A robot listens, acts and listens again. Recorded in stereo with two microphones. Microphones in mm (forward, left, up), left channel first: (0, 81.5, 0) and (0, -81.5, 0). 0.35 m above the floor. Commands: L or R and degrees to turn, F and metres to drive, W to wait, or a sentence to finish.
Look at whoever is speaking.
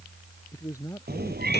L20
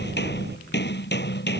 W
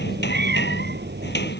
W
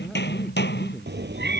I heard a man speaking, but can't make it out now. It was about straight ahead or 140° left.